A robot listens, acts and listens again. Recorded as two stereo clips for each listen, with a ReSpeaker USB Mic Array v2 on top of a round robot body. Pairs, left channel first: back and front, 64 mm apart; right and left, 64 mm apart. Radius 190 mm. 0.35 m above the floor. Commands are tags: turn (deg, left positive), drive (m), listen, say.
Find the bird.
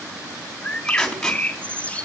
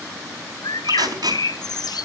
<turn deg="-110"/>
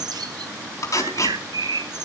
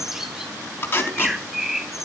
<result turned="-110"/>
<say>Found it: a bird, straight ahead.</say>